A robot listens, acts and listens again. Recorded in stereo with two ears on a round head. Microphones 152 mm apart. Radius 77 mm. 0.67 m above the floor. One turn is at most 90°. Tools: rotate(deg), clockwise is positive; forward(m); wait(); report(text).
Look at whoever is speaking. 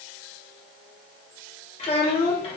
rotate(-35)
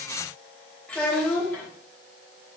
rotate(-10)
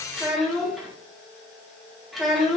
report("Found it: a child speaking, straight ahead, 1 to 2 m away.")